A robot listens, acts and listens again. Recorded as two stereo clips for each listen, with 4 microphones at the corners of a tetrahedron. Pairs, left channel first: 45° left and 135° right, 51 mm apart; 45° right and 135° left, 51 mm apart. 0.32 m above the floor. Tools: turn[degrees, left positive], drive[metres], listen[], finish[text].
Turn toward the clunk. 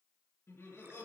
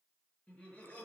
Action: listen[]
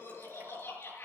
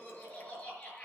Action: listen[]
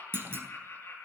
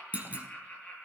Thought: The clunk: 170° right.
Action: turn[-170]
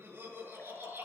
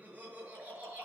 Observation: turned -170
Action: finish[I heard a clunk from this way, but can't make it out now.]